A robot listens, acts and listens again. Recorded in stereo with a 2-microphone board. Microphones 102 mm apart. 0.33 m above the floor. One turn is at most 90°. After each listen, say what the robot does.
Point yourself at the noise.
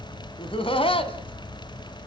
Turn 65° left.
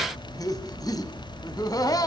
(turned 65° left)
Turn 45° left.
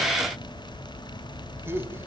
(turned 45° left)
Turn 25° right.
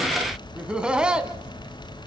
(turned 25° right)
Turn 10° right.
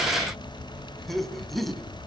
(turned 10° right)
Facing the laughter.